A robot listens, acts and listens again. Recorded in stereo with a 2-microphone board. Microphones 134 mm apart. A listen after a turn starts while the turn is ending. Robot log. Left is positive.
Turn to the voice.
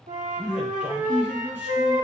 cmd yaw -30
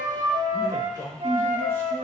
note: So it is at 20° left.
cmd yaw +20
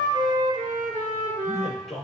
end: Facing the man speaking, 2 to 4 m away.